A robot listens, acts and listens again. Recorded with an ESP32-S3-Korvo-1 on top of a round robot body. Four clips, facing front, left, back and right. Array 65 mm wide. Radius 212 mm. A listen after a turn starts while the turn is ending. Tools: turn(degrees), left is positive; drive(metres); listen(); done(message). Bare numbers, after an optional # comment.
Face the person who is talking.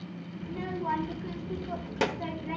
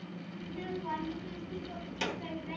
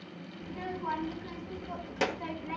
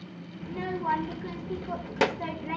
# The child speaking: 85° right.
turn(-85)
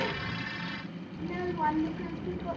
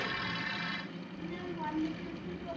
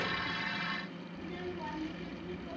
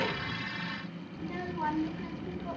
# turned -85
# The child speaking is now 20° right.
turn(-20)
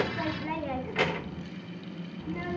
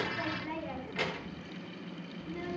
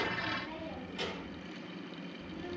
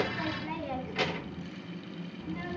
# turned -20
done("Facing the child speaking.")